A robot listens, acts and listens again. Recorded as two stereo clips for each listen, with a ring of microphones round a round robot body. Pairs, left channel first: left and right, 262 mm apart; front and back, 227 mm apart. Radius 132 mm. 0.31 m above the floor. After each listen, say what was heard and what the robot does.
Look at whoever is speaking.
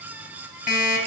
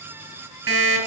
Keep listening.
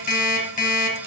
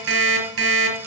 Keep listening.
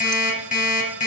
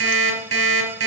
I can't make out anyone speaking to turn to.